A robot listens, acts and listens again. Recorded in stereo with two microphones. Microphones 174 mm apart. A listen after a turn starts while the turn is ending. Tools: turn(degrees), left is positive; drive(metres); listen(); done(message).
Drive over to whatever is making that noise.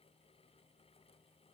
listen()
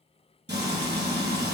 turn(degrees=-90)
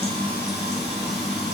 drive(metres=1.0)
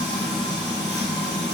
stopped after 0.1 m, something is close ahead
done("Something is in my way. I am facing the frying but have not reached it.")